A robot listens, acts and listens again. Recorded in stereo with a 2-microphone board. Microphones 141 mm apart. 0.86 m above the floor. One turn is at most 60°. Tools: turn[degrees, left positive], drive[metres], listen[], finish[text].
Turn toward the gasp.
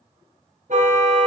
Action: listen[]
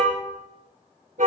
Action: listen[]
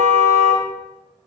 Action: finish[I can't make out a gasp to turn to.]